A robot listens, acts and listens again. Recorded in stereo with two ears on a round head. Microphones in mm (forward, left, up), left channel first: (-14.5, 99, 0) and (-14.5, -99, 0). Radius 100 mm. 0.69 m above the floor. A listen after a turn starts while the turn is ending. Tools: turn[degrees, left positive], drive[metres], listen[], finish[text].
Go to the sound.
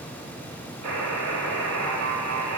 Action: turn[-90]
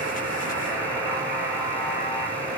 Thought: So it is at 10° right.
Action: turn[-10]
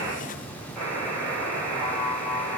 Action: drive[1.0]
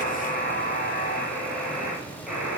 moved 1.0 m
Action: drive[1.0]
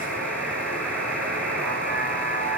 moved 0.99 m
Action: drive[1.0]
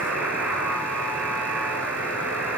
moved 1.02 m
Action: drive[1.0]
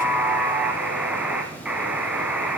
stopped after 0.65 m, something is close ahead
Action: finish[Arrived at the buzzer, straight ahead.]